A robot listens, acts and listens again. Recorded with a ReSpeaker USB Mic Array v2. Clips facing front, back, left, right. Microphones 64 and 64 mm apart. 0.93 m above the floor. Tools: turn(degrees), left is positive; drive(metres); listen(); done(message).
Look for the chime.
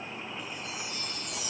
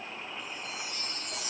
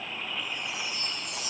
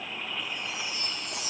turn(degrees=-135)
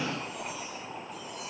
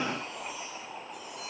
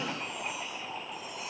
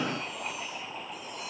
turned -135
listen()
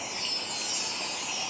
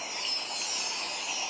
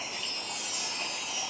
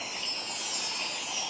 done("Facing the chime, 2 to 4 m away.")